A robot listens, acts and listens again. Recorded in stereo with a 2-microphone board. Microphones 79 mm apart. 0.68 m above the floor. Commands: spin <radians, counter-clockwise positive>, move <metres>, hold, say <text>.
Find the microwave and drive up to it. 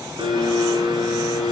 hold
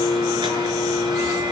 hold
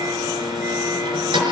say I can't make out a microwave to turn to.